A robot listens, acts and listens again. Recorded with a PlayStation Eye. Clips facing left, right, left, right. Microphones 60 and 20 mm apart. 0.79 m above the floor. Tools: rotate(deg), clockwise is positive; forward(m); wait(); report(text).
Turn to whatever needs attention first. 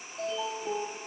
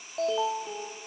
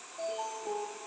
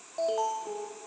rotate(75)
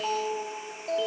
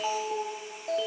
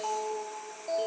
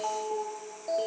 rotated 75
report("Found it: an alarm, straight ahead, under 1 m away.")